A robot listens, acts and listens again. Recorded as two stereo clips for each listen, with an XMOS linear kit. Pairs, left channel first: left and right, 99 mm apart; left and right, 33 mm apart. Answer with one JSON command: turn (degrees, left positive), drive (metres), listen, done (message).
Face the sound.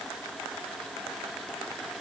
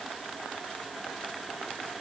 {"listen": true}
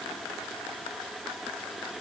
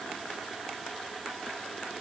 {"listen": true}
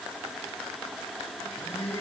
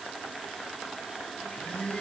{"turn": 25}
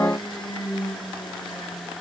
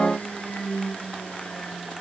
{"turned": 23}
{"turn": 130}
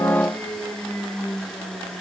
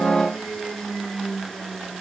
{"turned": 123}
{"done": "Found it: a blender, straight ahead, over 4 m away."}